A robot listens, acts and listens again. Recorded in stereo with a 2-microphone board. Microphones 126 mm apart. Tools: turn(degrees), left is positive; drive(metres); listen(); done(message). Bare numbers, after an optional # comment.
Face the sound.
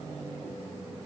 listen()
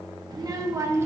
# The child speaking: about 20° right or 160° right.
turn(-20)
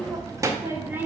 turn(-30)
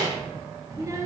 # The child speaking: about 25° right or 155° right.
turn(-25)
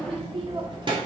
# So it is at 140° right.
turn(-140)
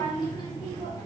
# The child speaking is now 35° left.
turn(35)
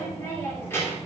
# The child speaking is now 20° left.
turn(20)
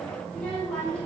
# The child speaking is now 10° left.
turn(10)
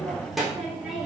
done("Facing the child speaking.")